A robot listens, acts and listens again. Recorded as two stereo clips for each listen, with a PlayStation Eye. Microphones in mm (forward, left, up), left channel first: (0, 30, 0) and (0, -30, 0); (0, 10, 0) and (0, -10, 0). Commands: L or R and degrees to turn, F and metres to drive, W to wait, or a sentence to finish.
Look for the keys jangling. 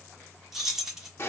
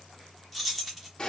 R30
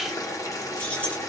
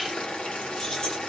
W
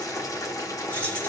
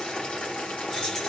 W
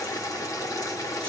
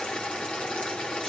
I heard keys jangling, but can't make it out now. It was about 25° left or 145° right.